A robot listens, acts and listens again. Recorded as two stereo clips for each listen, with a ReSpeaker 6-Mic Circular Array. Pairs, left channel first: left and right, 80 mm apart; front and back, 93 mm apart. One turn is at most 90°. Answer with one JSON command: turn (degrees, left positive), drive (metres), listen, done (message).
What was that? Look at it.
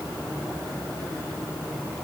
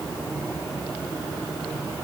{"listen": true}
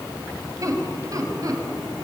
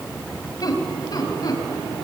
{"turn": -45}
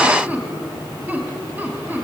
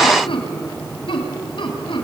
{"turn": -25}
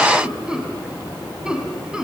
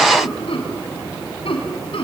{"turn": -10}
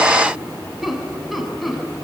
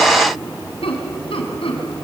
{"done": "Found it: laughter, straight ahead, over 4 m away."}